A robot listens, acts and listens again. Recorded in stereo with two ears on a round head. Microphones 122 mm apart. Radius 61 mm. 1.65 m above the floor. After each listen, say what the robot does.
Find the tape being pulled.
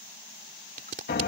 Turn 60° right.
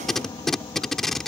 Facing the tape being pulled.